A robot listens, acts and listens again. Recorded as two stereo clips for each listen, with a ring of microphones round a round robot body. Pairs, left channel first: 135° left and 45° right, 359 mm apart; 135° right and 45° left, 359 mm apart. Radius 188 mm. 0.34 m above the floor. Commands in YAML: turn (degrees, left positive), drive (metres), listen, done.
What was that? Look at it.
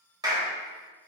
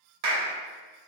turn: 35
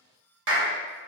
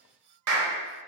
done: "Facing the clap, 1 to 2 m away."